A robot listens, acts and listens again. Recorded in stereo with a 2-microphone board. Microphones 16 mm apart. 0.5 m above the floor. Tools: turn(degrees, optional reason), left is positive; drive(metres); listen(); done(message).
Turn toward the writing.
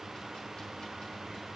listen()
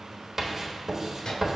turn(degrees=-20, reason="The writing: about 20° right or 160° right.")
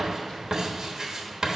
turn(degrees=-140, reason="So it is at 140° right.")
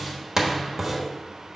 turn(degrees=-35, reason="The writing is now 35° right.")
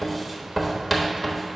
turn(degrees=-10, reason="The writing is now 10° right.")
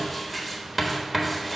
turn(degrees=-10, reason="The writing is now 10° right.")
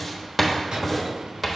done("Facing the writing.")